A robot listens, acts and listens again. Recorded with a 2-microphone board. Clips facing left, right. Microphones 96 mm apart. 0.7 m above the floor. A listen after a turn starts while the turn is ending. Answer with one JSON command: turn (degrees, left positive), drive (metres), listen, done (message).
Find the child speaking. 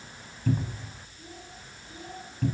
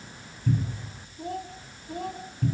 {"turn": -60}
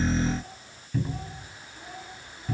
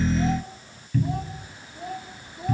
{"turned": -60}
{"turn": -75}
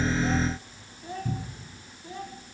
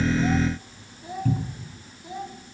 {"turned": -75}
{"turn": -15}
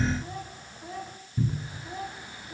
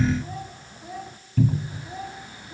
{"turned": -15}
{"done": "Found it: a child speaking, straight ahead, over 4 m away."}